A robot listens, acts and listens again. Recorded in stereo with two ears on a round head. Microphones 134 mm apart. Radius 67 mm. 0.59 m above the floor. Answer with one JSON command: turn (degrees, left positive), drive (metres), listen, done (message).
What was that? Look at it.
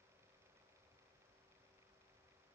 {"listen": true}
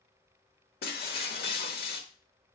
{"turn": 75}
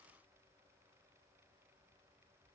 {"listen": true}
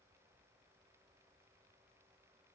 {"done": "I heard breaking glass, but can't make it out now. It was about straight ahead or 30° left."}